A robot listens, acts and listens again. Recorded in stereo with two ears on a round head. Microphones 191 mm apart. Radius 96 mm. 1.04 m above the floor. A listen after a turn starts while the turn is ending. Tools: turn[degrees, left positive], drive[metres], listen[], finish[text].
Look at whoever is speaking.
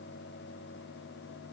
Action: listen[]
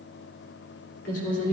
Thought: The woman speaking: about 55° left or 125° left.
Action: turn[55]
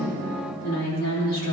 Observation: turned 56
Thought: So it is at 65° left.
Action: turn[65]
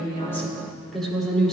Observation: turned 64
Action: finish[Facing the woman speaking, 2 to 4 m away.]